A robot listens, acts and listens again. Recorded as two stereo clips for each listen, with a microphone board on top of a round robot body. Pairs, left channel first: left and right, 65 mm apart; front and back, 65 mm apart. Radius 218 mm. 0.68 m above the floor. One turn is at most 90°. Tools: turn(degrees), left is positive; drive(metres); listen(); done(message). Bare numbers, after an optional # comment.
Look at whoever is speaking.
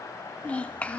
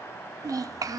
# The child speaking: 160° left.
turn(90)
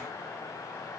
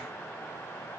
# Nothing new. It was at 70° left.
turn(70)
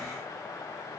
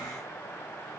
listen()
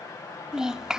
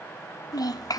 # The child speaking is now 10° right.
turn(-10)
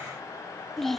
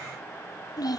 done("Found it: a child speaking, straight ahead, 1 to 2 m away.")